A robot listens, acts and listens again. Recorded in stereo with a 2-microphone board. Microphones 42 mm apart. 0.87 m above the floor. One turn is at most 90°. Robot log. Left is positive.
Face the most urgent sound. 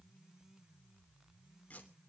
cmd idle
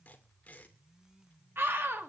note: The scream: about 65° right or 115° right.
cmd yaw -65
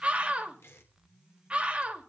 note: So it is at 30° right.
cmd yaw -30
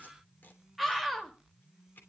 end: Facing the scream, 2 to 4 m away.